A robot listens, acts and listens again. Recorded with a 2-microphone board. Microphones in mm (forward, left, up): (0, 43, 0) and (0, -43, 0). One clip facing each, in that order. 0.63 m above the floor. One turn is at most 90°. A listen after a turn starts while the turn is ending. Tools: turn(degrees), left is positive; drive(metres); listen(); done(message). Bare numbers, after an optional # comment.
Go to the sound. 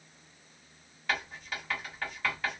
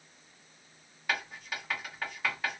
turn(-30)
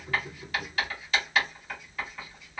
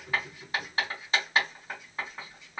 # So it is at 135° right.
turn(-90)
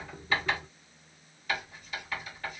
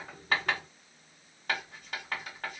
# The writing is now 85° right.
turn(-85)
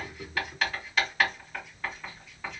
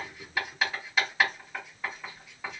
# The writing is now 10° right.
turn(-10)
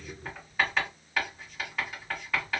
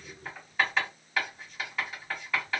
drive(1.0)
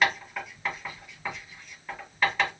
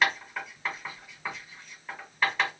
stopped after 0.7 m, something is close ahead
done("I am next to the writing.")